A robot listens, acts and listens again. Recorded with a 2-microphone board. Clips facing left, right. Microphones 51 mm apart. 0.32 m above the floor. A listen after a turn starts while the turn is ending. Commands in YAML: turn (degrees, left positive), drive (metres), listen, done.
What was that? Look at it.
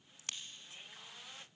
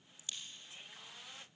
turn: 90
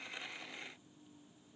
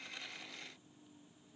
done: "Facing where the crack came from. I can't hear it now."